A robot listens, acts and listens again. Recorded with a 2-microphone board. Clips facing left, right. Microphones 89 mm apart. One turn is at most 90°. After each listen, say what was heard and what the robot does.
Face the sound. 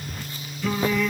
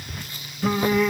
The singing: about 40° right or 140° right. Turn 40° right.
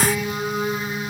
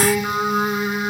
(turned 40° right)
So it is at 95° right. Turn 90° right.
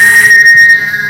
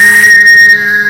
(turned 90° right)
The singing is now 40° right. Turn 40° right.
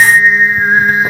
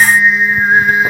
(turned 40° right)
The singing is now 15° left. Turn 15° left.
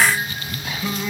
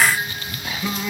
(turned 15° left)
Found it: singing, straight ahead, 1 to 2 m away.